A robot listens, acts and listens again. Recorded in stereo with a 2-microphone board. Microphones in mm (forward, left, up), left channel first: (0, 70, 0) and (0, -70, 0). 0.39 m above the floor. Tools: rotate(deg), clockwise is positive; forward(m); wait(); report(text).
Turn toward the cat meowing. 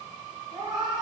rotate(30)
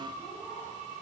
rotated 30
wait()
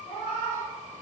rotate(-30)
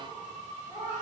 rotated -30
report("Found it: a cat meowing, straight ahead, 2 to 4 m away.")